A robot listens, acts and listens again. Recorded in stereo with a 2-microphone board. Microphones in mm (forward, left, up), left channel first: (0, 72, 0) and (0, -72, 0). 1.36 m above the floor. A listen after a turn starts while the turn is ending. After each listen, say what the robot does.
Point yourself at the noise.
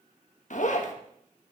Turn 65° left.
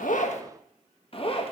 Turn 45° left.
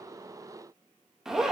Facing the zipper, 1 to 2 m away.